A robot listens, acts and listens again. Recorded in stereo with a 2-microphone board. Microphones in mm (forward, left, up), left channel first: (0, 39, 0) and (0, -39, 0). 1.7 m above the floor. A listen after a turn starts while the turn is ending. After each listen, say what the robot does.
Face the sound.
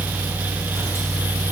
Keep listening.
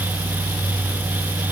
Keep listening.
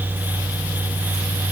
I can't make out anything.